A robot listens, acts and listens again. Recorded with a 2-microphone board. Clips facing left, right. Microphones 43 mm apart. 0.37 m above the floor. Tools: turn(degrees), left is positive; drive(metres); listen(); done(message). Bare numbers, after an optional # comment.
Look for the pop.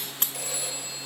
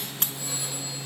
listen()
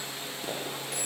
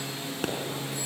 # The pop: about 75° right or 105° right.
turn(-75)
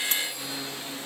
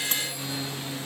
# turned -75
listen()
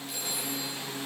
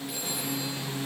done("I heard a pop, but can't make it out now. It was about straight ahead or 30° right.")